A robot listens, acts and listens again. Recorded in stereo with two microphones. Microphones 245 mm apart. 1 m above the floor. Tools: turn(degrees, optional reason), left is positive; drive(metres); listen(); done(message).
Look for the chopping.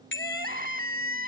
listen()
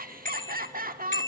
listen()
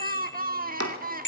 turn(degrees=-90)
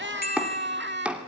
done("Facing the chopping, 2 to 4 m away.")